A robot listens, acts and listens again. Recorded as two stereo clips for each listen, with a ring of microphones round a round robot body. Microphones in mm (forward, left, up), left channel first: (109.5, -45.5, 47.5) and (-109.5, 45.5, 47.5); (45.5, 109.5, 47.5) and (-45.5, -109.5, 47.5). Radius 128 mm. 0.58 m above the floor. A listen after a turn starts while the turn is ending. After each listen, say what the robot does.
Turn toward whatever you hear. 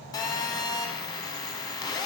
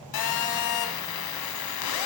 Turn 50° left.
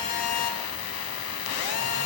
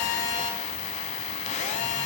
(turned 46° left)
Found it: a phone buzzing, straight ahead.